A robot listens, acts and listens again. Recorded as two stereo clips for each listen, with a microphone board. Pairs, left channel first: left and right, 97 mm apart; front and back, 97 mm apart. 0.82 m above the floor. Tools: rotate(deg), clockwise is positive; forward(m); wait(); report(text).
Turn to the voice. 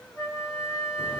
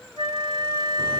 wait()
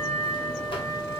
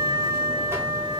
wait()
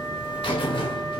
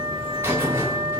report("I can't make out anyone speaking, only a buzzer and a flute.")